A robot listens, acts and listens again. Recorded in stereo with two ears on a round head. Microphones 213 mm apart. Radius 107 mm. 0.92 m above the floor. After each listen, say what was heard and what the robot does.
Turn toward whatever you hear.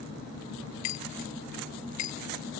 Turn 90° left.
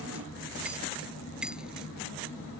Keep listening.
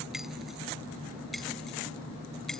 Keep listening.
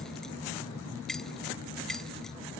Facing the keys jangling.